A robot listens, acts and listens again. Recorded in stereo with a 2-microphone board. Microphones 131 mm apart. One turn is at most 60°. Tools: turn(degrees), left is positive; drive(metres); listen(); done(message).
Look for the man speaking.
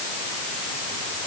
listen()
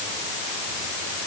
listen()
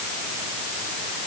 done("I can't make out a man speaking to turn to.")